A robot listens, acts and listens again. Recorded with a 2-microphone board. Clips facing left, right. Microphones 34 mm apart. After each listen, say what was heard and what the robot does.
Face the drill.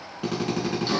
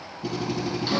The drill: about 70° left or 110° left. Turn 70° left.
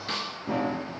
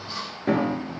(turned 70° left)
Keep listening.
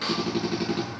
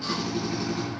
So it is at 35° left. Turn 35° left.
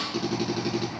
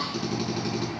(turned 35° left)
The drill is now 10° left. Turn 10° left.
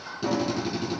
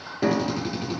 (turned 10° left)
Facing the drill, over 4 m away.